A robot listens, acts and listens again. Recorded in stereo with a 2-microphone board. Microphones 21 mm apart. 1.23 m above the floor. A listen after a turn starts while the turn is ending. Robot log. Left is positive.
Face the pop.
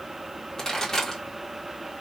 note: The pop: about 25° left or 155° left.
cmd yaw +25
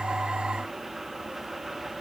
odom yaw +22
cmd idle
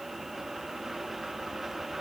end: I heard a pop, but can't make it out now. It was about 5° left or 130° left.